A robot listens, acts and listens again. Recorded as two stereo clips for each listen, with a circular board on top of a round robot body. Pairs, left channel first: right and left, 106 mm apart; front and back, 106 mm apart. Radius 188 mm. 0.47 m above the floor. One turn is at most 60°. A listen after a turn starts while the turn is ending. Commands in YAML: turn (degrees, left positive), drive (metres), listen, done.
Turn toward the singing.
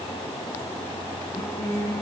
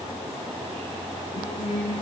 turn: -15
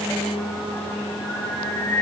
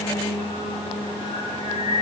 turn: -10
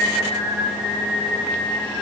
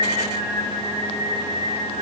turn: -15
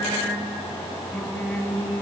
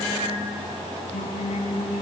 done: "Facing the singing."